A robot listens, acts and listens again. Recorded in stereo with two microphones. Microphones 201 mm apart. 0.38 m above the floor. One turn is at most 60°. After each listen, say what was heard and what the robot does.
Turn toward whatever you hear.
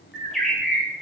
Turn 30° left.
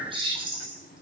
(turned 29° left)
So it is at 30° right. Turn 30° right.
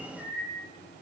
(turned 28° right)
Facing the bird, 2 to 4 m away.